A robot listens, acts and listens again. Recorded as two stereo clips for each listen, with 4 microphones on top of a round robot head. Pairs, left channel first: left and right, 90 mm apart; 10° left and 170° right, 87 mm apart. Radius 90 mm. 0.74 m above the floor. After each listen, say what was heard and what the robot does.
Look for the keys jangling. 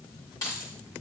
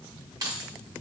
The keys jangling: 145° left. Turn 145° left.
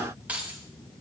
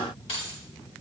The keys jangling is now 15° right. Turn 15° right.
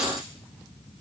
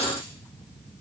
Keep listening.
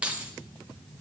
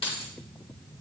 The keys jangling is now 15° right. Turn 15° right.
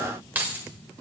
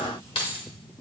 The keys jangling is now 20° right. Turn 20° right.
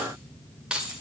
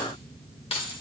The keys jangling is now 10° right. Turn 10° right.
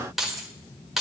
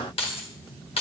Facing the keys jangling, 1 to 2 m away.